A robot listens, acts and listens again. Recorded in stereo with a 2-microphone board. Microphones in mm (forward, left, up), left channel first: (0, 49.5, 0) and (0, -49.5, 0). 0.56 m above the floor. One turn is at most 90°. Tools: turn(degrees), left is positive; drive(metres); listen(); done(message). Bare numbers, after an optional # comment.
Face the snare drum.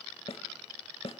# The snare drum: about 70° left or 110° left.
turn(70)
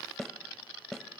done("Found it: a snare drum, straight ahead.")